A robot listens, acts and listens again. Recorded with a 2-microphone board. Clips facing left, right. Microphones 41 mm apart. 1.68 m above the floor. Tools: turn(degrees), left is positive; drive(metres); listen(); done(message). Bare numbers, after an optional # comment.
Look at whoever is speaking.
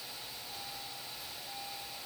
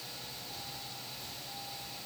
listen()
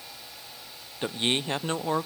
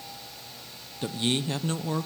# The man speaking: about 30° left or 150° left.
turn(30)
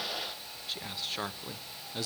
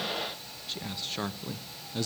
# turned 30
done("Found it: a man speaking, straight ahead.")